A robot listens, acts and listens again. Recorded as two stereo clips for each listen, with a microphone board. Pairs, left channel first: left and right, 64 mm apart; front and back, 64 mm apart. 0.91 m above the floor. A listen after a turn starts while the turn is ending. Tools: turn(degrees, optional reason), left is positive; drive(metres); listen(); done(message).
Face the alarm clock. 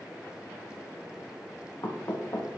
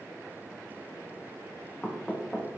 listen()
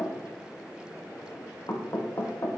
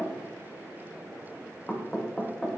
listen()
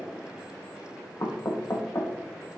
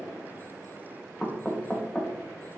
done("I can't make out an alarm clock to turn to.")